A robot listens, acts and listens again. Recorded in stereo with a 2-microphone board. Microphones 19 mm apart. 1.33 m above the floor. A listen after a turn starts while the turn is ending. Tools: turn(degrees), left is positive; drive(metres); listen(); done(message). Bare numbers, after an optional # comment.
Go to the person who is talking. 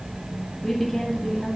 # The woman speaking: about 20° left or 160° left.
turn(20)
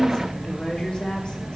# So it is at 140° left.
turn(140)
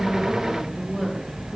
# The woman speaking is now 15° right.
turn(-15)
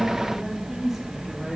drive(1.0)
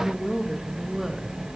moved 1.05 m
# The woman speaking is now 10° right.
turn(-10)
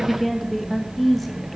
drive(1.0)
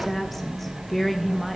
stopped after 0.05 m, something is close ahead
# The woman speaking is now 10° left.
turn(10)
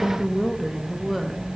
done("Arrived at the woman speaking, straight ahead.")